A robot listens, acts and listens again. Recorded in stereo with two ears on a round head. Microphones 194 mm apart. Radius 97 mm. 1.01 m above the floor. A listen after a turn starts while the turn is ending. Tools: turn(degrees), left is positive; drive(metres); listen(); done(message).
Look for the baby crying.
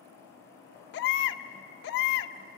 turn(degrees=50)
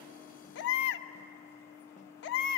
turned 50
turn(degrees=65)
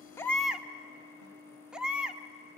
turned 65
done("Facing the baby crying.")